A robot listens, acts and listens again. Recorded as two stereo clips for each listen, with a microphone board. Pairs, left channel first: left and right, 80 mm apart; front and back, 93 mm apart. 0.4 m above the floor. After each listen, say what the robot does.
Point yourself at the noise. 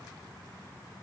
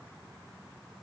Keep listening.
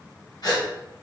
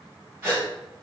Turn 120° left.
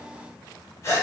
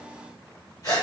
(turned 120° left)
Turn 45° left.
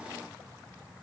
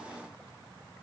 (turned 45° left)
Keep listening.
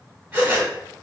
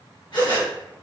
Turn 25° right.
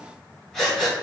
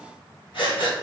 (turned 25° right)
Facing the breathing, 1 to 2 m away.